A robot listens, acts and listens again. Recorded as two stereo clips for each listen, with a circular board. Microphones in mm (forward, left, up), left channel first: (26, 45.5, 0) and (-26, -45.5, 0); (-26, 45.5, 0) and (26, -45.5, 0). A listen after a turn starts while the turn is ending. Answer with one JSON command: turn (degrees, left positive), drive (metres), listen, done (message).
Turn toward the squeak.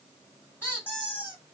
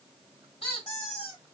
{"turn": 125}
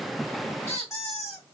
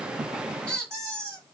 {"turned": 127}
{"done": "Found it: a squeak, straight ahead, 1 to 2 m away."}